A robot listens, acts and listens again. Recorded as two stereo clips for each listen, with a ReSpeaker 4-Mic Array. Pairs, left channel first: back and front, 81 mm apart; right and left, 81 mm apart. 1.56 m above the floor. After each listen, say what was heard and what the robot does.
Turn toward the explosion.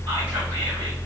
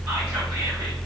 Keep listening.
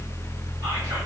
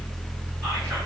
Keep listening.
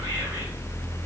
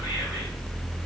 I can't make out an explosion to turn to.